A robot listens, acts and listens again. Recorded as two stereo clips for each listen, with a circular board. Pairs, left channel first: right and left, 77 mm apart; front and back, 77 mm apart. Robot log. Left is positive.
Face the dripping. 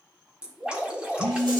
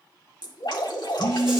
note: The dripping: 15° left.
cmd yaw +15
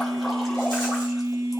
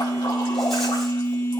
cmd idle
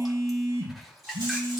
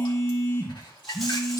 end: Facing the dripping, 1 to 2 m away.